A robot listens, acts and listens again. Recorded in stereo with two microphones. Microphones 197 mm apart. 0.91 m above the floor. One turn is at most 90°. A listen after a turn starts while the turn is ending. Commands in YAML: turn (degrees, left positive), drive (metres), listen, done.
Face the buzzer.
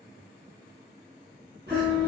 turn: -55
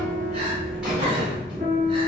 done: "Facing the buzzer."